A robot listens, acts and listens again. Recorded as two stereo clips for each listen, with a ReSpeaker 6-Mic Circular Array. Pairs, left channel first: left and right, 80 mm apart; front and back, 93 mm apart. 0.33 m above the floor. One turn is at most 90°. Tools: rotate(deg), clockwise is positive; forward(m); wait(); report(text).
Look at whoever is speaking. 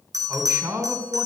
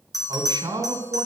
rotate(90)
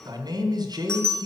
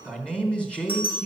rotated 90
rotate(80)
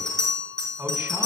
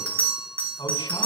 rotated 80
rotate(15)
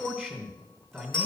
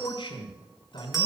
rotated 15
report("Facing the man speaking, 2 to 4 m away.")